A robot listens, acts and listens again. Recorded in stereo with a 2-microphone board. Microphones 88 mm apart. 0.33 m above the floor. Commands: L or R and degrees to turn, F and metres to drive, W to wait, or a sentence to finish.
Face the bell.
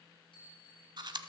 L90
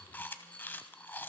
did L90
W
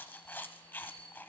L10
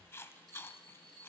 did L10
Facing the bell, over 4 m away.